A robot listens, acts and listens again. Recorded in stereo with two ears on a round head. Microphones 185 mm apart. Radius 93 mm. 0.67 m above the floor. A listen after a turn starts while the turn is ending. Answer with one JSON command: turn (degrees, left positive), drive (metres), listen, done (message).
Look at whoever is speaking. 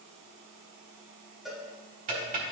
{"listen": true}
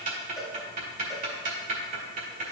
{"listen": true}
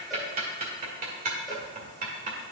{"done": "I can't make out anyone speaking, only a cowbell and ticking."}